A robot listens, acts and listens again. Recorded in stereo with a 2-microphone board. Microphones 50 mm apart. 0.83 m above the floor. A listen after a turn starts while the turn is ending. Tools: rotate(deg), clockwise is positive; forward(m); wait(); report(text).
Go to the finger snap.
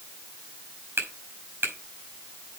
rotate(50)
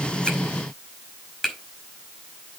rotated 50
forward(1.0)
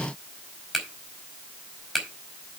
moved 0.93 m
forward(1.0)
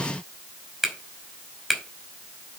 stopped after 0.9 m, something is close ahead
rotate(10)
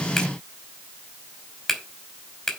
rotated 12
report("Something is in my way. I am facing the finger snap but have not reached it.")